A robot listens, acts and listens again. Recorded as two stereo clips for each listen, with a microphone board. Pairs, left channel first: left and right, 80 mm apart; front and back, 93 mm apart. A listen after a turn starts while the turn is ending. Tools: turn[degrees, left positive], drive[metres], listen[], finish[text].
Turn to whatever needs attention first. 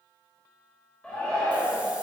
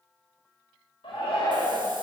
Thought: The shout: 15° left.
Action: turn[15]
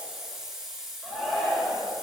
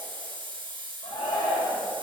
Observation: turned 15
Action: finish[Found it: a shout, straight ahead.]